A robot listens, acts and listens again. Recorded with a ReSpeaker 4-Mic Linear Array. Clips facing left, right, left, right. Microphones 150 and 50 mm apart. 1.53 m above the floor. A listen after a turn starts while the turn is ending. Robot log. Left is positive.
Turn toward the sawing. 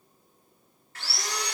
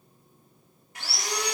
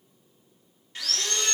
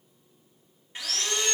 note: The sawing: about 15° right or 165° right.
cmd yaw -15
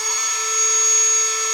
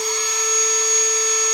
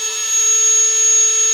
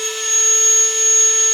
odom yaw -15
note: So it is at 150° right.
cmd yaw -150
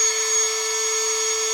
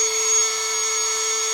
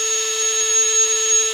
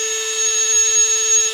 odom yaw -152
end: Found it: sawing, straight ahead, 1 to 2 m away.